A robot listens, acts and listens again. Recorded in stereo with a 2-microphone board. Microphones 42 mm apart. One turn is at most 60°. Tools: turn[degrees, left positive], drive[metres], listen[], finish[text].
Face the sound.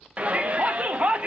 Thought: The shout: about 30° right or 150° right.
Action: turn[-30]
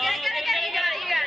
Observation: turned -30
Action: finish[Facing the shout, under 1 m away.]